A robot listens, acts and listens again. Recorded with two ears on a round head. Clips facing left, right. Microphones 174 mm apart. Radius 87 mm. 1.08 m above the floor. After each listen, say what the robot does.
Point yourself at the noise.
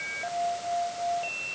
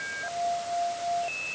Keep listening.
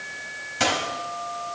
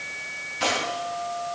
Turn 90° left.
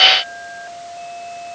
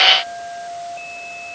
Facing where the dropped coin came from. I can't hear it now.